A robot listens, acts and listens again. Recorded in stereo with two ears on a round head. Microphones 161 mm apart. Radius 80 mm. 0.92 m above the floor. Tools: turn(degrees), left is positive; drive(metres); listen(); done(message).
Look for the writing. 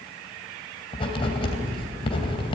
turn(degrees=30)
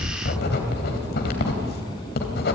turn(degrees=120)
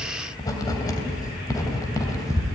turn(degrees=20)
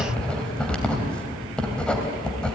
done("Facing the writing.")